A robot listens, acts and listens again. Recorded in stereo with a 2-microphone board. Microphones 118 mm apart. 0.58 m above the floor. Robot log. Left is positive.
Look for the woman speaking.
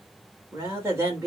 note: The woman speaking: about 25° right or 155° right.
cmd yaw -25
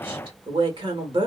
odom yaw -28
note: So it is at 125° right.
cmd yaw -125
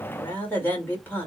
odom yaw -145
note: The woman speaking is now 20° left.
cmd yaw +20
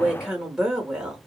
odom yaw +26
end: Facing the woman speaking.